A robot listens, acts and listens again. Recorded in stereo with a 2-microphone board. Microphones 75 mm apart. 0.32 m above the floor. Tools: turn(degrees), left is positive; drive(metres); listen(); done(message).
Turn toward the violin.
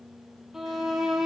turn(degrees=-30)
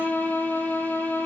turn(degrees=25)
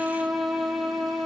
done("Found it: a violin, straight ahead, 2 to 4 m away.")